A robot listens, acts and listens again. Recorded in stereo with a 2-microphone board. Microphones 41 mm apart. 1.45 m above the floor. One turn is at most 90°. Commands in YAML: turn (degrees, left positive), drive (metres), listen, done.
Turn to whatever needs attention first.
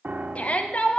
turn: 35
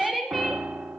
done: "Found it: a shout, straight ahead."